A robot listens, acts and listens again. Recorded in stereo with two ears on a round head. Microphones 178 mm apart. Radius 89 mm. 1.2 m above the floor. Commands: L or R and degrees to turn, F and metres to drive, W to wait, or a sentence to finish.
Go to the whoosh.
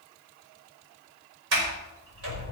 W
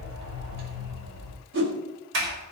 R60
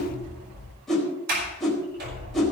F1.0
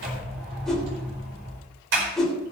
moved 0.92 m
F1.0
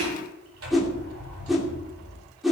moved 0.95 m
F1.0
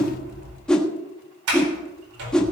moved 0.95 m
F1.0
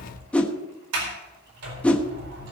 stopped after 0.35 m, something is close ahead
Arrived at the whoosh, straight ahead.